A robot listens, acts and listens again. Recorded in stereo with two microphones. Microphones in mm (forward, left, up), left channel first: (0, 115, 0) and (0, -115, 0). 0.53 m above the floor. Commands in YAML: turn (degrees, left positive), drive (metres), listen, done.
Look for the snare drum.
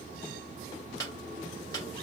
turn: 30
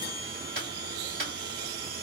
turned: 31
turn: 135
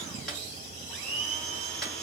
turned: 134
done: "Found it: a snare drum, straight ahead."